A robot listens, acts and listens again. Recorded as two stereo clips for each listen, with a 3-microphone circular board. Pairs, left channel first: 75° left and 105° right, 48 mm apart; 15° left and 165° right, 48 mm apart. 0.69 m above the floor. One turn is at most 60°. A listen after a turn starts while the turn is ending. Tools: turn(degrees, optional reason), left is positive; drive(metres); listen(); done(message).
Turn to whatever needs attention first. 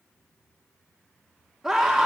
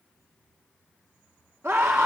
turn(degrees=60, reason="The scream: 170° left.")
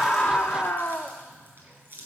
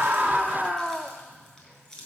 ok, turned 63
turn(degrees=60, reason="The scream is now 110° left.")
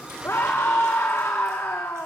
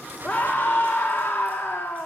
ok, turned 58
turn(degrees=50, reason="The scream is now 50° left.")
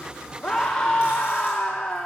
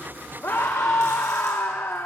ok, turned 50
done("Facing the scream, under 1 m away.")